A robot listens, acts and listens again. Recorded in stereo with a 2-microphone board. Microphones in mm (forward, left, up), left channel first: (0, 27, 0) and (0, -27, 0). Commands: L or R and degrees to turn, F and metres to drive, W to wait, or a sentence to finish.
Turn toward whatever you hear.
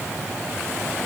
W
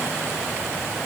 W
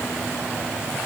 I can't make out anything to turn to.